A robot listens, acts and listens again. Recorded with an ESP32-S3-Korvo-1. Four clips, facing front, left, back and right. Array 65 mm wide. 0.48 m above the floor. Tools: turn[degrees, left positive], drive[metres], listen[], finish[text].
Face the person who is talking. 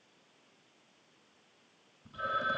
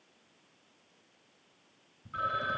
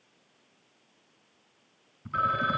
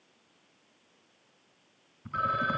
Action: listen[]
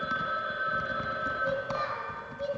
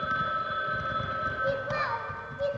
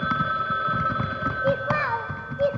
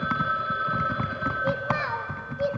Thought: The child speaking: 170° right.
Action: turn[-170]
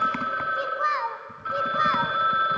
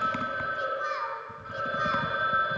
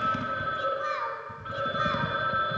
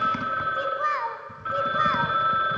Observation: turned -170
Thought: The child speaking is now 40° right.
Action: turn[-40]
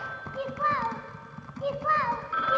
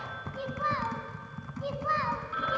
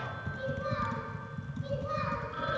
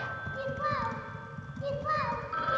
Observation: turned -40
Action: finish[Found it: a child speaking, straight ahead.]